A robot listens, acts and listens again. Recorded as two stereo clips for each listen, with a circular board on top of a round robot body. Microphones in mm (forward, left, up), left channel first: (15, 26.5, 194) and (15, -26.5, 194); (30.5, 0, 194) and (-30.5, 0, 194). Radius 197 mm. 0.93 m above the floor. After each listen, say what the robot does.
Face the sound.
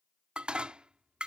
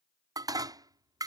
Turn 165° right.
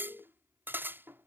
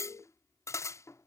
Turn 40° right.
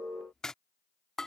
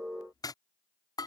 Turn 10° left.
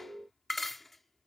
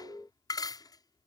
Facing the dishes clattering.